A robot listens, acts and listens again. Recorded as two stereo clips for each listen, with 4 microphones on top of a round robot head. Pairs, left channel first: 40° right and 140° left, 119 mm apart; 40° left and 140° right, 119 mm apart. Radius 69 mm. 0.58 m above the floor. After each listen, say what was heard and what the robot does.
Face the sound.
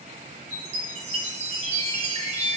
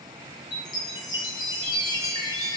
The chime: 100° left. Turn 100° left.
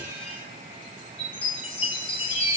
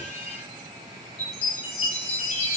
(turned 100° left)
Facing the chime, over 4 m away.